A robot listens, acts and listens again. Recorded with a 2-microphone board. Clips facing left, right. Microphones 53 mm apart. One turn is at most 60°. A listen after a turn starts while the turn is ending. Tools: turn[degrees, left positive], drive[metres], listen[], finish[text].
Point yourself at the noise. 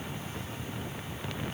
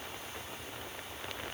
Action: listen[]
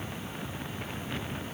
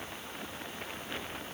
Action: listen[]
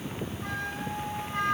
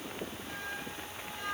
Action: turn[60]
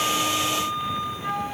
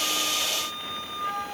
Thought: So it is at 15° left.
Action: turn[15]
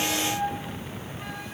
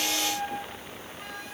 Action: finish[Found it: a flute, straight ahead.]